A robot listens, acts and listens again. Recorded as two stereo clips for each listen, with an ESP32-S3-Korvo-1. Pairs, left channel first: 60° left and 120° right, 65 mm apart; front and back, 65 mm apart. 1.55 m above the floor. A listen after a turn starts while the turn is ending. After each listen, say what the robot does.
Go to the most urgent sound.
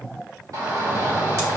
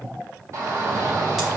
Turn 140° right.
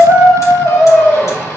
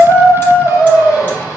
Drive 1.0 m forward.
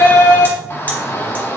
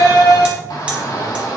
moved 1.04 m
Turn 10° left.
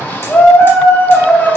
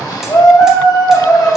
Drive 1.0 m forward.
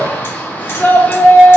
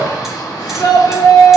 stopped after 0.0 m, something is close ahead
I am next to the shout.